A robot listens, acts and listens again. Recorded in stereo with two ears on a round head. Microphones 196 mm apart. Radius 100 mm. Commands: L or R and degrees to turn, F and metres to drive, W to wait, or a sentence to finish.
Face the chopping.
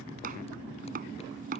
R40
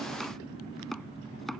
Facing the chopping.